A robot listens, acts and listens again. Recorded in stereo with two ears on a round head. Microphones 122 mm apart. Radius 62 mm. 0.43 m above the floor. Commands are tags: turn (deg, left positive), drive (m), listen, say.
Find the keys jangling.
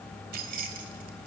<turn deg="-65"/>
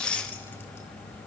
<listen/>
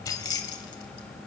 <turn deg="30"/>
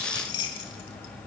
<turn deg="35"/>
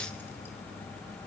<listen/>
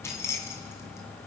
<turn deg="20"/>
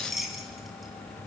<say>Facing the keys jangling.</say>